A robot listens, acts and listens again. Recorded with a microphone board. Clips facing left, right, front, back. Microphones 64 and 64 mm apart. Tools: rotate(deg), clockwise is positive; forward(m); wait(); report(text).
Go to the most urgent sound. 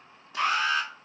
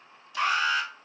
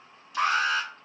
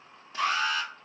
forward(1.0)
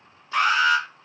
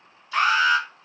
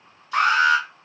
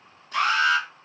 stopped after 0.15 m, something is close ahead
report("Something is in my way. I am facing the alarm but have not reached it.")